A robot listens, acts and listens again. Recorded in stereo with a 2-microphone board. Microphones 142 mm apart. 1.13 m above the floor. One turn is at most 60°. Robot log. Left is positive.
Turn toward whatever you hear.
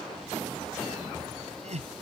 note: The laughter: about 55° right or 125° right.
cmd yaw -55
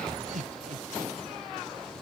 note: So it is at 70° right.
cmd yaw -60
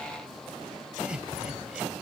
end: Facing the laughter.